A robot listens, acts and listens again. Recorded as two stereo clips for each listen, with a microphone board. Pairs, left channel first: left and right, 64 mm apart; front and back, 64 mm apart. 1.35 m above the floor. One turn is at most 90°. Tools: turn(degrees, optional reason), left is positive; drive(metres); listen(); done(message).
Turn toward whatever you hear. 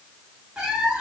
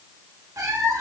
turn(degrees=-90, reason="The cat meowing: 160° right.")
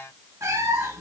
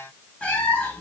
turn(degrees=-60, reason="The cat meowing is now 60° right.")
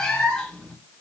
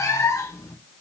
turn(degrees=15, reason="The cat meowing is now 15° left.")
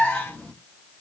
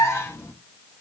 turn(degrees=20, reason="The cat meowing is now 20° left.")
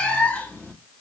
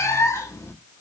turn(degrees=25, reason="The cat meowing is now 25° left.")
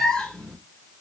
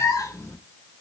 turn(degrees=15, reason="The cat meowing is now 15° left.")
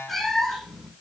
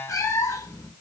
done("Found it: a cat meowing, straight ahead, 1 to 2 m away.")